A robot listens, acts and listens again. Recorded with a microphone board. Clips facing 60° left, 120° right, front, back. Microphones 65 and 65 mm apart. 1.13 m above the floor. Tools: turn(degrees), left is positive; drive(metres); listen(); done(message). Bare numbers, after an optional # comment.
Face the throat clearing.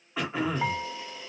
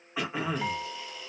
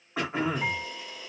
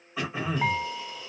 # The throat clearing: 35° right.
turn(-35)
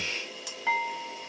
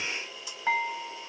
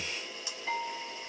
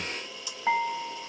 listen()
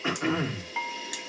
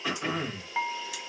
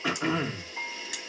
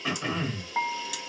done("Found it: throat clearing, straight ahead.")